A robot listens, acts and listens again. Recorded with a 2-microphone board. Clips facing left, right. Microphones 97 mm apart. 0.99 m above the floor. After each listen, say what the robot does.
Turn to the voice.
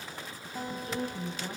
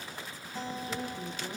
Turn 60° left.
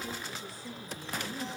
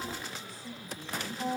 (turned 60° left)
Found it: a woman speaking, straight ahead, over 4 m away.